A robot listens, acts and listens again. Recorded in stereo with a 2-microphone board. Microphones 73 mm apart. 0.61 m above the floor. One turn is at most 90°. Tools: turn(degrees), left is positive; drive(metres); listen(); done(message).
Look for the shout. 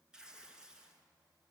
listen()
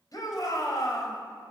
turn(degrees=55)
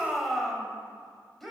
done("Found it: a shout, straight ahead, 2 to 4 m away.")